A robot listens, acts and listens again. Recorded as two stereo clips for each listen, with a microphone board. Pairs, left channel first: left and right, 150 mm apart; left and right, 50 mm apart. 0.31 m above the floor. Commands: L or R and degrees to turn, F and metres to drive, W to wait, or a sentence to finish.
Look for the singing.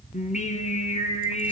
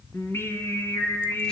L50
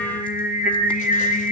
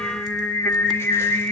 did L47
L65
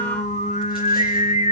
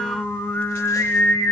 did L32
L55
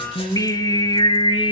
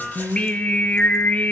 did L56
L35
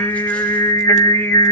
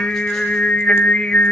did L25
L15
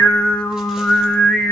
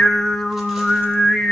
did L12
Facing the singing.